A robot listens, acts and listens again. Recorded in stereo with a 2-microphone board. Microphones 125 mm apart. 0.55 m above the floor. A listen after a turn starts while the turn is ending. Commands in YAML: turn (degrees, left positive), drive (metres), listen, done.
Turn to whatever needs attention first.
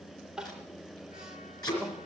turn: -30
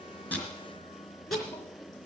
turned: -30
listen: true
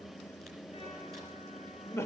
turn: 25
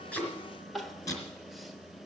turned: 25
done: "Facing the crying."